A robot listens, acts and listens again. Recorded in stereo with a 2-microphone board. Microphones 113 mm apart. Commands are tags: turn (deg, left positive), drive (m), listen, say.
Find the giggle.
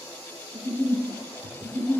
<turn deg="30"/>
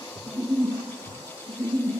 <turn deg="-30"/>
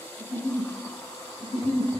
<say>Facing the giggle.</say>